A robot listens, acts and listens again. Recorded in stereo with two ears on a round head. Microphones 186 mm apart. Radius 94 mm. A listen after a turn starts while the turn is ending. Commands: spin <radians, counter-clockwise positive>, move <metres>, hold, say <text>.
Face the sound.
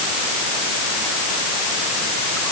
hold
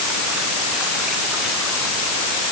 hold
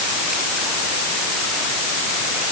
say I can't make out anything to turn to.